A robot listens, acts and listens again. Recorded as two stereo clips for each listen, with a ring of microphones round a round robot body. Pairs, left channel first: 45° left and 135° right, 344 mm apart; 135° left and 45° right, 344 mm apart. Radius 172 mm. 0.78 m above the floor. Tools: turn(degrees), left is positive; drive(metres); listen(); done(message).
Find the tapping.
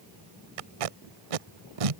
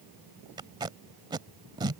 listen()
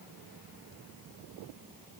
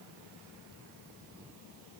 listen()
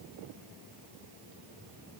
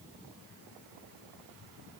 done("I can't make out tapping to turn to.")